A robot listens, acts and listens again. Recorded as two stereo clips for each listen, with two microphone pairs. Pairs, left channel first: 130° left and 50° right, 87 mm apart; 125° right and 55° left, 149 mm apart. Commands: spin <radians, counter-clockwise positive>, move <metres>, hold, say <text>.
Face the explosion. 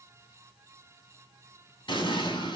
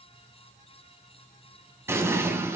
spin 2.18
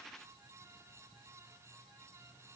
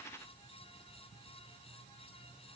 say I heard an explosion from this way, but can't make it out now.